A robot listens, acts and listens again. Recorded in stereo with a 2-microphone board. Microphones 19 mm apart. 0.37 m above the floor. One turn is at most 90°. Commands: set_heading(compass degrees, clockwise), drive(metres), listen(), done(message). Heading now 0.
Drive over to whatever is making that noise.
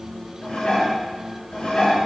set_heading(290)
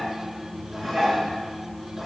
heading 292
drive(1.0)
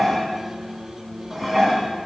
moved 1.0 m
drive(1.0)
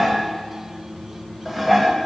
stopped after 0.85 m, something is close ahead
done("Arrived at the dishes clattering, straight ahead.")